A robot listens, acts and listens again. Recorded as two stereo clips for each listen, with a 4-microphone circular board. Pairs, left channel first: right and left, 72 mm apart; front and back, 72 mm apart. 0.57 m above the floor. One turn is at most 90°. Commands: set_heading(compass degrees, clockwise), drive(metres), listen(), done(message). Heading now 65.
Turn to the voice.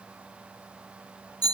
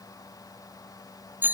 listen()
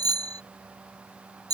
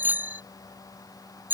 listen()
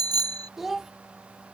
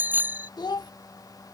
done("Facing the child speaking.")